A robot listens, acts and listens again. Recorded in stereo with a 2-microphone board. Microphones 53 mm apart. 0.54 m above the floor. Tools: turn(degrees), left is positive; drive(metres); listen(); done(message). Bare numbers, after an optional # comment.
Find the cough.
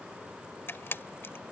listen()
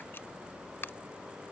listen()
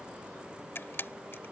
done("I can't make out a cough, only a camera shutter.")